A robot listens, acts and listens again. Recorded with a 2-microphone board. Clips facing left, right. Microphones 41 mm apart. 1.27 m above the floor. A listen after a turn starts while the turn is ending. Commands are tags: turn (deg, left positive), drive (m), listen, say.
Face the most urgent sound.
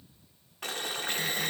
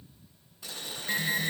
<turn deg="-55"/>
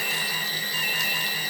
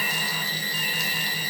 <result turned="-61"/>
<turn deg="-10"/>
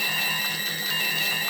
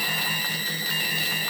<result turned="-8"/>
<say>Found it: an alarm, straight ahead.</say>